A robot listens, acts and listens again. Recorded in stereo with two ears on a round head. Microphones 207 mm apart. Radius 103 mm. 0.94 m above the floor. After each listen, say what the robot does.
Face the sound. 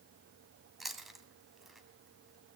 Turn 30° left.
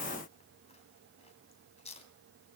Turn 150° left.
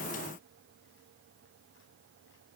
Keep listening.
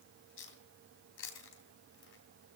Turn 55° left.
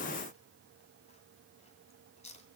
Turn 30° left.
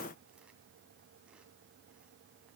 Keep listening.
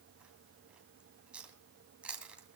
Facing the chewing.